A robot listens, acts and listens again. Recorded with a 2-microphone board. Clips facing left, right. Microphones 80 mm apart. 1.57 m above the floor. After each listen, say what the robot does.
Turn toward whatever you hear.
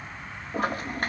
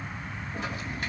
Turn 50° left.
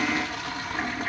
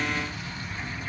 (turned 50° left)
Turn 80° left.
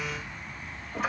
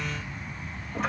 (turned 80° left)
Found it: a toilet flushing, straight ahead, 1 to 2 m away.